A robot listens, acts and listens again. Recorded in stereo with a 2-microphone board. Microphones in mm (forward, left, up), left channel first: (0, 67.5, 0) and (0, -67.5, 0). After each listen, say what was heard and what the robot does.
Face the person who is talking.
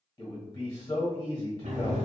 The man speaking: about 30° left or 150° left. Turn 30° left.
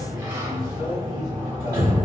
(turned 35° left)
Keep listening.
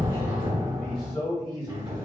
Found it: a man speaking, straight ahead.